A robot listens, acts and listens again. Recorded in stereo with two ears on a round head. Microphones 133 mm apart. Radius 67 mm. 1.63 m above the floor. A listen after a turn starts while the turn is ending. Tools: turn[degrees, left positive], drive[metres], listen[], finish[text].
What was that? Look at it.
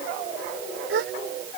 Action: turn[-90]
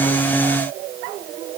Action: finish[I heard a gasp from this way, but can't make it out now.]